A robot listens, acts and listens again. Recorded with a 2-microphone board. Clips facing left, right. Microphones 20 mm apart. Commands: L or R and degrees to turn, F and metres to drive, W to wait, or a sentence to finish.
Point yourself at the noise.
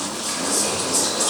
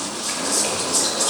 L30
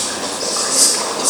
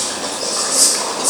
L140
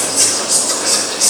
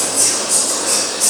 L30
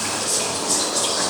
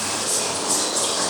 Found it: whispering, straight ahead.